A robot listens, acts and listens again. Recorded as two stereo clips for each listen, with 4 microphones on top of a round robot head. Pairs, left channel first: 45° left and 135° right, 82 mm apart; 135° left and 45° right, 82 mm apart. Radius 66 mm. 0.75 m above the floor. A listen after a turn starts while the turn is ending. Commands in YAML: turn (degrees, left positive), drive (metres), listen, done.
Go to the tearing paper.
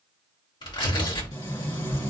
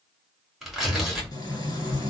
turn: 40
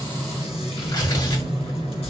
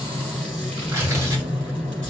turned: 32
drive: 1.0
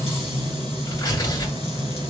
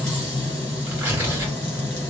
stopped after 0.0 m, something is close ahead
turn: 10
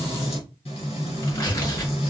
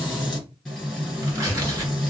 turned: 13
done: "Blocked. The tearing paper is further on, straight ahead."